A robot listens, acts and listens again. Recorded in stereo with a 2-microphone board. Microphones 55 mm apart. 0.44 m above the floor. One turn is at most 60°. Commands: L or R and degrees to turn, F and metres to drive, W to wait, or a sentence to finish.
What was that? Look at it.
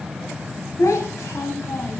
L60
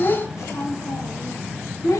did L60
L60
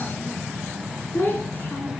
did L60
L40
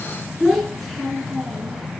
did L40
Facing the child speaking, 2 to 4 m away.